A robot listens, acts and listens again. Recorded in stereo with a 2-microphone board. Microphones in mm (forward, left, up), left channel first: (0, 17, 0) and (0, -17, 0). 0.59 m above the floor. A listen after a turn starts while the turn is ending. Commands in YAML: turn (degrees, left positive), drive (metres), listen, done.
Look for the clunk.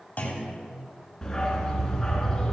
turn: 45
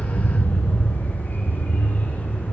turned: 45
listen: true
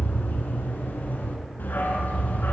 done: "I heard a clunk, but can't make it out now. It was about straight ahead or 90° left."